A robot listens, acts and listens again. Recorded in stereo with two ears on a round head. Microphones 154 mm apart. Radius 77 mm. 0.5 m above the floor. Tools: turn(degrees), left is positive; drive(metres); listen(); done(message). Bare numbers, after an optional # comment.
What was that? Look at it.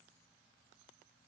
listen()
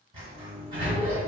# The sliding door: about 30° right or 150° right.
turn(-30)
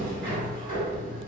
# So it is at 110° right.
turn(-110)
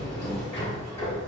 # The sliding door is now 25° left.
turn(25)
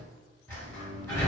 # The sliding door is now 15° left.
turn(15)
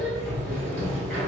done("Facing the sliding door.")